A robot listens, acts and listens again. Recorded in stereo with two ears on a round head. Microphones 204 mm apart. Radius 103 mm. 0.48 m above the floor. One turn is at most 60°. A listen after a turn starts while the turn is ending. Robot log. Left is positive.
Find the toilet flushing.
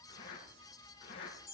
cmd idle
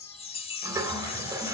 note: The toilet flushing: about 15° right or 165° right.
cmd yaw -15
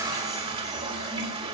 note: So it is at 155° right.
cmd yaw -60
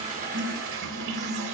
note: The toilet flushing is now 105° right.
cmd yaw -60
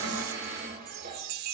note: The toilet flushing is now 45° right.
cmd yaw -45
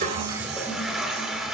end: Facing the toilet flushing.